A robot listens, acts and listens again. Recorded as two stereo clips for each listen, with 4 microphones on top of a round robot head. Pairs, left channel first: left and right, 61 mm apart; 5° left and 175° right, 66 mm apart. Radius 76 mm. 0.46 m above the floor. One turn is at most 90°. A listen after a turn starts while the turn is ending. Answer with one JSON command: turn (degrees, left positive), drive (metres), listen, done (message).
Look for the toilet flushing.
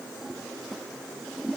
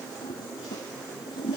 {"done": "Facing the toilet flushing."}